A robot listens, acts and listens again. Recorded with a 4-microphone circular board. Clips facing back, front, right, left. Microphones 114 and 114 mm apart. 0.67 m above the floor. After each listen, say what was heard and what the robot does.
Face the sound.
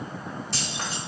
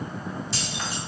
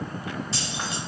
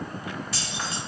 The keys jangling: 155° right. Turn 155° right.
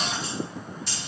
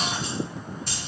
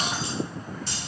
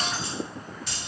The keys jangling is now 40° right. Turn 40° right.
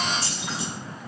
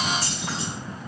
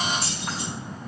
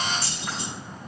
The keys jangling is now 10° right. Turn 10° right.
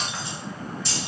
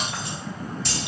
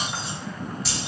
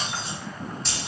The keys jangling is now 10° right. Turn 10° right.
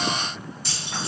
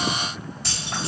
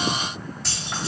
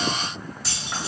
Facing the keys jangling.